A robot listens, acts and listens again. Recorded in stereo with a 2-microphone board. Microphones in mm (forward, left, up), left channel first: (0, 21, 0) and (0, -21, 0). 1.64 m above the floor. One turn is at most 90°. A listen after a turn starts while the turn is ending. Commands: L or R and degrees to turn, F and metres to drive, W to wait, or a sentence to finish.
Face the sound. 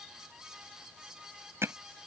R90
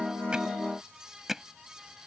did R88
Facing the hammering.